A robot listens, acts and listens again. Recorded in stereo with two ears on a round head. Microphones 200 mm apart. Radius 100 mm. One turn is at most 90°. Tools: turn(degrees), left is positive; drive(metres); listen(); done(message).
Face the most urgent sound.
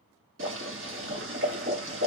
listen()
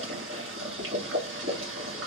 listen()
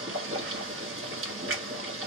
done("I can't make out anything urgent, only boiling.")